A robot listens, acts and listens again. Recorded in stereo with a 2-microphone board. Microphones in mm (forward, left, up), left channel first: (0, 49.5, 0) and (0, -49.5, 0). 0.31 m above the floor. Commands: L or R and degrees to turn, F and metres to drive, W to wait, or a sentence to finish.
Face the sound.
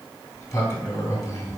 L30
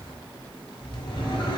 L120
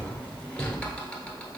L10
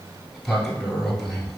Facing the sliding door.